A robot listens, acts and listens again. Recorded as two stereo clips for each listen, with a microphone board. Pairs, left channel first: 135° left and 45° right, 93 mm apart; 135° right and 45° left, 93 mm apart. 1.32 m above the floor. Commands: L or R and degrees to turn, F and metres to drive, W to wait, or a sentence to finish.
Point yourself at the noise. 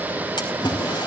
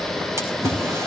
L100
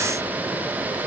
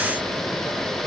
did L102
Facing where the splash came from. I can't hear it now.